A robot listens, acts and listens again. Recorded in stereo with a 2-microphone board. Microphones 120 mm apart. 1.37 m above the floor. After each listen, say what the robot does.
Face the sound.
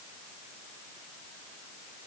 Keep listening.
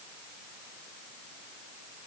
Keep listening.
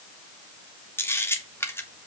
Turn 20° left.
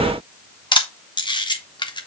Turn 140° left.
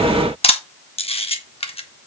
Turn 55° left.
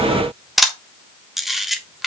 Facing the camera shutter, 1 to 2 m away.